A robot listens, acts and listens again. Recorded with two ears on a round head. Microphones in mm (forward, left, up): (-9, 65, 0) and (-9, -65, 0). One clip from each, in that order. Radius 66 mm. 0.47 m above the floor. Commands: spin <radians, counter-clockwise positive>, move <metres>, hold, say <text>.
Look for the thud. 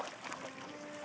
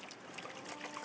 hold
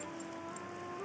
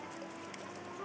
hold
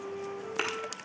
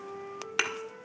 spin -0.96
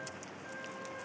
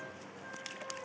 hold
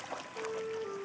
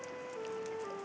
say I heard a thud, but can't make it out now. It was about straight ahead or 70° right.